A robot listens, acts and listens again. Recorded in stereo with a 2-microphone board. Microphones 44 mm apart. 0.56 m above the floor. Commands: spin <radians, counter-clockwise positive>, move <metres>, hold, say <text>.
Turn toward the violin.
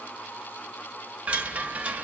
hold
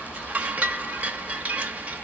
hold
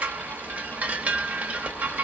say I can't make out a violin, only a chime.